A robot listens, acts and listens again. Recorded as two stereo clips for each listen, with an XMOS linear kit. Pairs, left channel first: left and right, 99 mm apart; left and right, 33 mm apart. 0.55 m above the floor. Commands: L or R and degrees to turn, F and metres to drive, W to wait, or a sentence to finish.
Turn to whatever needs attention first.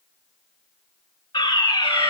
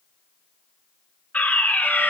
L50
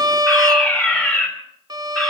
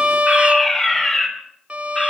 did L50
L20
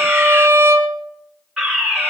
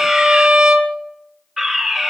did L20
Facing the fire alarm.